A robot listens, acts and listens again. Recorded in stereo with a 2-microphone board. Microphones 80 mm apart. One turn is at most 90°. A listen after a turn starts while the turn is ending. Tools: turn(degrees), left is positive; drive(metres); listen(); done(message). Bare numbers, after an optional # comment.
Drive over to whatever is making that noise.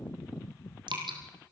# The dripping: about 75° right or 105° right.
turn(-75)
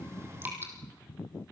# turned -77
# So it is at 30° right.
turn(-30)
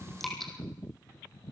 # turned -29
drive(1.0)
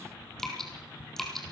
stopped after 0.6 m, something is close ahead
done("Blocked. The dripping is further on, straight ahead.")